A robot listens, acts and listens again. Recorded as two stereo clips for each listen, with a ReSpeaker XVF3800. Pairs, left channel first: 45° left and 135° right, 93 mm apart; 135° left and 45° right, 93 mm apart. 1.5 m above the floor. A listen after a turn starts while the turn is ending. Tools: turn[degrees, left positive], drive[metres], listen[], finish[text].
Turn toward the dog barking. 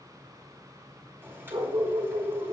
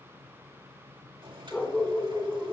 Thought: The dog barking: 155° right.
Action: turn[-155]
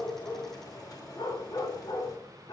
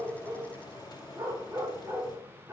Thought: The dog barking is now 15° left.
Action: turn[15]
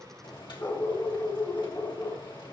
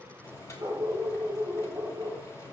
Action: finish[Facing the dog barking.]